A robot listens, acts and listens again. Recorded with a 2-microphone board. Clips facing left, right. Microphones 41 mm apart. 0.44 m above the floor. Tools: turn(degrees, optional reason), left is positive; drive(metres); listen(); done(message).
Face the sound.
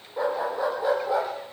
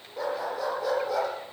turn(degrees=25, reason="The dog barking: about 25° left or 155° left.")
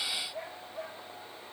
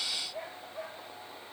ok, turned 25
listen()
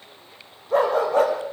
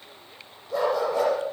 turn(degrees=135, reason="So it is at 135° left.")
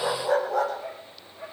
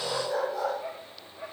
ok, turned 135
turn(degrees=55, reason="The dog barking is now 55° left.")
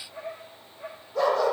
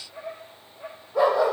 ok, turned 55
turn(degrees=-20, reason="The dog barking is now 20° right.")
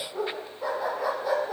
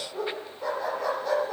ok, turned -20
done("Found it: a dog barking, straight ahead, over 4 m away.")